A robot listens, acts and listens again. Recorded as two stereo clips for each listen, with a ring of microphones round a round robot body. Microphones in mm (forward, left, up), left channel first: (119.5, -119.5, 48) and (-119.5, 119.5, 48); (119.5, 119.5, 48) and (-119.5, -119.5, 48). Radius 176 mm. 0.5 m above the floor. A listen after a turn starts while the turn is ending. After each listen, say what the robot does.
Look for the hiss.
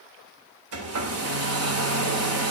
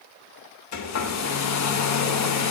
Keep listening.
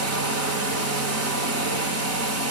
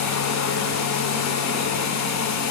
Keep listening.
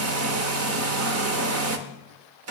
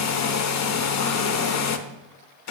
I can't make out a hiss, only a hair dryer.